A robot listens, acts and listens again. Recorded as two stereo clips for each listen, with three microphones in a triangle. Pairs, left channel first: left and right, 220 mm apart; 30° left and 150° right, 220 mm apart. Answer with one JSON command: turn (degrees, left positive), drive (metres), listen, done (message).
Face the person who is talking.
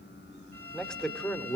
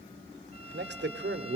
{"turn": 175}
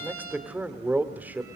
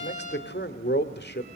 {"turn": -10}
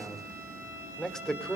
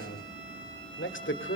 {"done": "Found it: a man speaking, straight ahead."}